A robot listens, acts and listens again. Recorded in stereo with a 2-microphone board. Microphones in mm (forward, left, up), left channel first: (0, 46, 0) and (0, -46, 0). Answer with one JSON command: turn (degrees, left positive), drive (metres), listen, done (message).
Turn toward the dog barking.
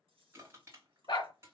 {"turn": 55}
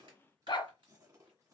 {"turn": 65}
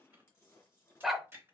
{"done": "Facing the dog barking."}